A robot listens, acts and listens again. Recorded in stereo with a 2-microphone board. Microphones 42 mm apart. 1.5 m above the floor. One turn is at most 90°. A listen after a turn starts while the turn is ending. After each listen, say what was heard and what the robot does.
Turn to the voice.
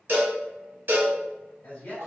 The man speaking: about 50° left or 130° left. Turn 50° left.
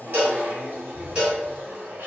Keep listening.
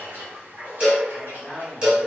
Found it: a man speaking, straight ahead, 1 to 2 m away.